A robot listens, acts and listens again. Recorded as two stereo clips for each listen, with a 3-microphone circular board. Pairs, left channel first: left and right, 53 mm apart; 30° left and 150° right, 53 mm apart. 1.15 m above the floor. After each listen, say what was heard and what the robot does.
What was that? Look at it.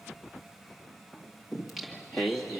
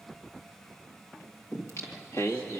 Found it: singing, straight ahead.